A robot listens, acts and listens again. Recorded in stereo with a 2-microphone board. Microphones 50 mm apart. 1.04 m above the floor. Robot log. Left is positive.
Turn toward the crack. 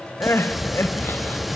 cmd yaw -30
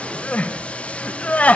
cmd idle
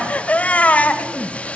end: I heard a crack, but can't make it out now. It was about 25° left or 145° right.